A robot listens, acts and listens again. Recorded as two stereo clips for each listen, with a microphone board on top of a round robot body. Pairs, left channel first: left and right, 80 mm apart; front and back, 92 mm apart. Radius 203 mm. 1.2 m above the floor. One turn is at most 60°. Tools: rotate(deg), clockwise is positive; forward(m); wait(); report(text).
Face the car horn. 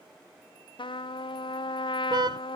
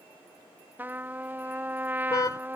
rotate(55)
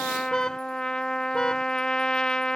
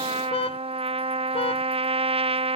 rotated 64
rotate(-10)
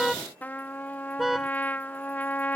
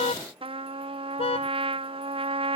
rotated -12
report("Found it: a car horn, straight ahead.")